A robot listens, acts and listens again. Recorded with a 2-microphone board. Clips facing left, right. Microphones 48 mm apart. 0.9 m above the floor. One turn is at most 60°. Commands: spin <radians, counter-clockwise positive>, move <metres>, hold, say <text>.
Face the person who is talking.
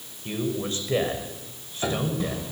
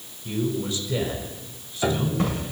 spin 0.70
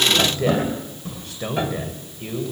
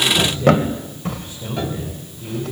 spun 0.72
spin 1.05
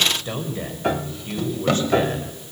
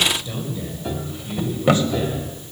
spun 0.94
spin 0.79
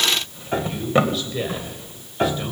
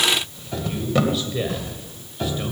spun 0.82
say Found it: a man speaking, straight ahead.